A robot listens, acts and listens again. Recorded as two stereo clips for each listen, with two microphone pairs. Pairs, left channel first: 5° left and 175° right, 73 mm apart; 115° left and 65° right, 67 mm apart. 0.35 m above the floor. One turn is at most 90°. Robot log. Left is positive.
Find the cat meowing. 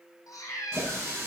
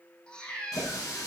note: The cat meowing: 40° left.
cmd yaw +40
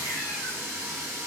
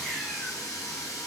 cmd idle
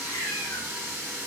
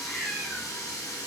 note: The cat meowing is now 30° left.
cmd yaw +30
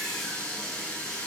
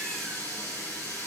cmd idle
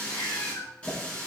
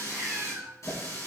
note: The cat meowing is now 20° right.
cmd yaw -20
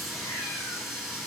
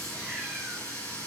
cmd idle
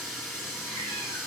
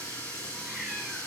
cmd idle
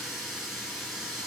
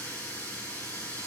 end: Facing where the cat meowing came from. I can't hear it now.